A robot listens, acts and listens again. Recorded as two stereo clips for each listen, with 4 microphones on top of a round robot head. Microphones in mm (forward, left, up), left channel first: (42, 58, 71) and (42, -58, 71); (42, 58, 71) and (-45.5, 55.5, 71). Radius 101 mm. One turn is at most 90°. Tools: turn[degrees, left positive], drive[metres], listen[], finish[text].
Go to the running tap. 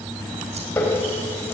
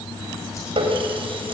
Thought: The running tap: 165° left.
Action: turn[90]
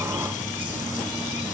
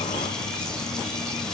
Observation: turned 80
Thought: Nothing new. It was at 85° left.
Action: turn[85]
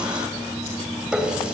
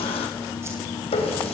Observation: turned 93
Thought: The running tap is now 10° right.
Action: turn[-10]
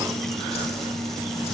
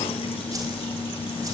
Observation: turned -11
Action: listen[]
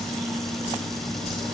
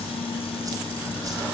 Action: listen[]
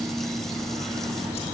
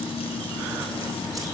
Action: finish[Facing where the running tap came from. I can't hear it now. I did not reach it.]